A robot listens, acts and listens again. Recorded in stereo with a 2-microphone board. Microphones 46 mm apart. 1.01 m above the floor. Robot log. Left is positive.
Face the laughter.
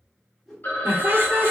note: The laughter: about 55° right or 125° right.
cmd yaw -55
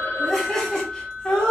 note: So it is at 20° left.
cmd yaw +20
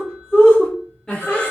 note: The laughter is now 20° left.
cmd yaw +20
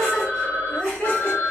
note: The laughter is now 10° left.
cmd yaw +10
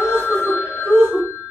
end: Facing the laughter.